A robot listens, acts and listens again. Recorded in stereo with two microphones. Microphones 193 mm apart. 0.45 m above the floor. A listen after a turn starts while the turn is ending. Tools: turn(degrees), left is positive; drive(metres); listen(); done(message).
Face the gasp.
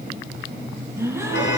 turn(degrees=-30)
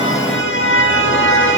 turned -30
listen()
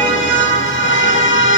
done("I heard a gasp, but can't make it out now. It was about 15° left or 135° right.")